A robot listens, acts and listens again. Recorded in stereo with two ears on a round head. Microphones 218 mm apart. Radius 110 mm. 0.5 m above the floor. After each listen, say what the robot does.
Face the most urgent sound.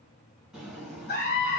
Turn 45° left.
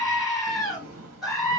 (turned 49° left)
Found it: a scream, straight ahead, 1 to 2 m away.